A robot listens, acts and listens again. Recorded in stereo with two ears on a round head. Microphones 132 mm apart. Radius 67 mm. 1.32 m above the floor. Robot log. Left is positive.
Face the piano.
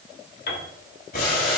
note: The piano: about 65° left or 115° left.
cmd yaw +65
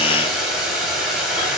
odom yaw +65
cmd idle
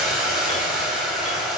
cmd idle
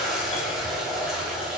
end: I heard a piano, but can't make it out now. It was about straight ahead or 50° left.